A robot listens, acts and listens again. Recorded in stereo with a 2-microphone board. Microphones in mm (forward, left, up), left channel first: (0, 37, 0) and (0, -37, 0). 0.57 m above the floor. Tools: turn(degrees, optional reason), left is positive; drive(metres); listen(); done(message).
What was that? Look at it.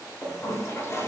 turn(degrees=40, reason="The toilet flushing: about 40° left or 140° left.")
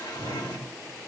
turn(degrees=100, reason="So it is at 100° left.")
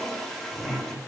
turn(degrees=10, reason="The toilet flushing is now 10° left.")
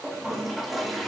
done("Facing the toilet flushing.")